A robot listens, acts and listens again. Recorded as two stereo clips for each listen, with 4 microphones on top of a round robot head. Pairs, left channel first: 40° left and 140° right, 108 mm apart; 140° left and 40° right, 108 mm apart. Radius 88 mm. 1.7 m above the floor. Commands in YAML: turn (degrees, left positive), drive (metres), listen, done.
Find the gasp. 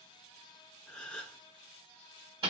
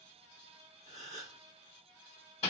turn: -45
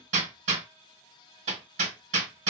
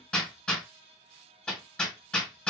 done: "I heard a gasp from this way, but can't make it out now."